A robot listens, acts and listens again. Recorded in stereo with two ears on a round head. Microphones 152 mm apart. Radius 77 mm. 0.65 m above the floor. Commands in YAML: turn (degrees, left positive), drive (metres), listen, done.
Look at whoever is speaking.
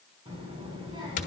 turn: -30
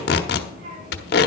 turn: -120
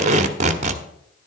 listen: true
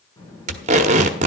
turn: 20
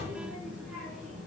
done: "Facing the child speaking."